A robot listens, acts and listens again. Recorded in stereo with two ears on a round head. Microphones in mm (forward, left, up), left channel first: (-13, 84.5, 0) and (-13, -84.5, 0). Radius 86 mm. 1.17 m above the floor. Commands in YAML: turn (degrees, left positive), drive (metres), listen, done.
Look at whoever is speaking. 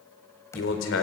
turn: 90
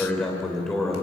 done: "Found it: a man speaking, straight ahead, 2 to 4 m away."